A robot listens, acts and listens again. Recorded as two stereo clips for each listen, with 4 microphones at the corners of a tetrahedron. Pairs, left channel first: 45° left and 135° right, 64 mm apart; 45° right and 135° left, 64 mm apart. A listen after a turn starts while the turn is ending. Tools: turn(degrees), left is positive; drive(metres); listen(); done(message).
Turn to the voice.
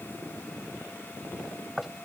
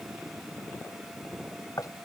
listen()
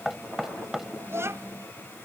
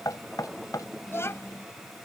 turn(degrees=-90)
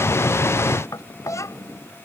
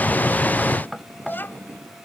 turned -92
turn(degrees=10)
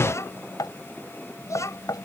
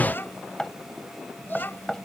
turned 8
turn(degrees=10)
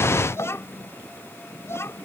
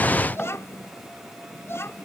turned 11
done("Found it: a child speaking, straight ahead.")